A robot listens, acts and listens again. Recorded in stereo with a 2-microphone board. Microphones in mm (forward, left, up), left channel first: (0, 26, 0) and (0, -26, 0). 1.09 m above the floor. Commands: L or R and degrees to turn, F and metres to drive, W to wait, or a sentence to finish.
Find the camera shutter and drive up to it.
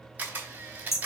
R35
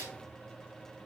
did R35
R110
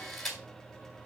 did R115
F1.0
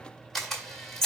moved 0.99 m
F1.0
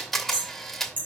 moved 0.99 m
F1.0
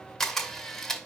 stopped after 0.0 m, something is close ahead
L10
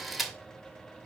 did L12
I am next to the camera shutter.